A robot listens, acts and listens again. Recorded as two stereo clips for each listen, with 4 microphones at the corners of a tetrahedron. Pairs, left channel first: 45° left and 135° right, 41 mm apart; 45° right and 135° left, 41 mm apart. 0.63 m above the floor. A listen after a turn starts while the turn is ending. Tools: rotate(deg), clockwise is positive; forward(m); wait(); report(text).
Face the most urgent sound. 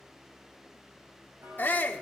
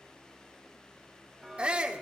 rotate(-75)
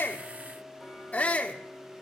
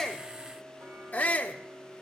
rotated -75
report("Found it: a shout, straight ahead.")